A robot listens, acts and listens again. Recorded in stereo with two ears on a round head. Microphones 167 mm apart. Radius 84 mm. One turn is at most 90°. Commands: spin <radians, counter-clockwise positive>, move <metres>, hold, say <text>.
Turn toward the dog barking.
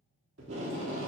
hold
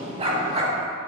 spin -0.61
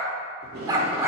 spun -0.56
spin -0.26
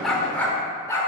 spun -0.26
spin 0.35
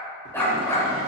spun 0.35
spin 0.26
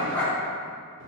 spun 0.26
spin 0.17
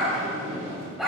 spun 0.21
say Found it: a dog barking, straight ahead.